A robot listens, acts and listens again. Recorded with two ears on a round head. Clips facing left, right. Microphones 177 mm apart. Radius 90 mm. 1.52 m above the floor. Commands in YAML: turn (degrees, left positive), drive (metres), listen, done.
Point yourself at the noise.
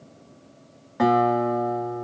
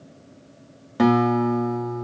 turn: -35
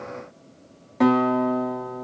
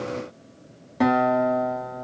done: "Facing the guitar."